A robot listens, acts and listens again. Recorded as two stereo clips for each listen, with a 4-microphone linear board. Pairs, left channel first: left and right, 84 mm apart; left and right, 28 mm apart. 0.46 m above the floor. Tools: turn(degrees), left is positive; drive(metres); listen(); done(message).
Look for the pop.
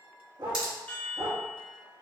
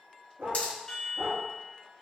turn(degrees=60)
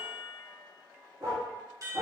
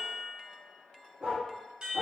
listen()
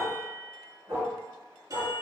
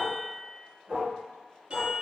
done("I heard a pop, but can't make it out now. It was about straight ahead or 60° left.")